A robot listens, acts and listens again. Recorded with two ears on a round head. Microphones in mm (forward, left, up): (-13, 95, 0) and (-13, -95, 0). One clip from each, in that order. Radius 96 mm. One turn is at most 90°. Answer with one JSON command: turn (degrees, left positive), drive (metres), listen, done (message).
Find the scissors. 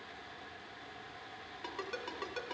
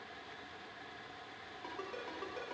{"listen": true}
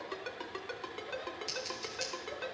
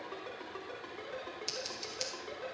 {"turn": -20}
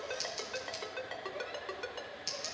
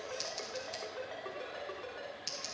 {"done": "Facing the scissors."}